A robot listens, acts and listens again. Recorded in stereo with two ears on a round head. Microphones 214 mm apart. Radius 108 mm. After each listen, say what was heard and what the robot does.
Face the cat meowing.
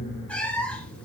Turn 30° left.
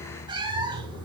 So it is at 20° right. Turn 20° right.
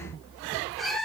Facing the cat meowing, 1 to 2 m away.